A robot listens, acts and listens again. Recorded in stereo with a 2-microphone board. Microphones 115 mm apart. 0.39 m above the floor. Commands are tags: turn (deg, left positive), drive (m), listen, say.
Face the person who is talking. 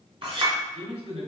<turn deg="-60"/>
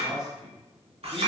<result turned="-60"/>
<say>Found it: a man speaking, straight ahead, 1 to 2 m away.</say>